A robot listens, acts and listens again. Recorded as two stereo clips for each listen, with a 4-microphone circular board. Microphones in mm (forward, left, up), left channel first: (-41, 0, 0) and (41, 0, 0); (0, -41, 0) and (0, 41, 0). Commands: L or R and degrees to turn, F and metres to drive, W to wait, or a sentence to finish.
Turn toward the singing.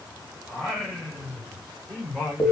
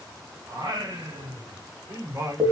L110
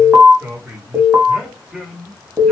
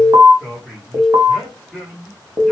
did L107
L110
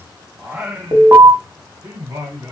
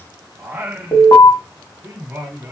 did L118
L50
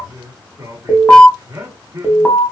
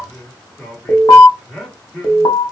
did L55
Found it: singing, straight ahead, 1 to 2 m away.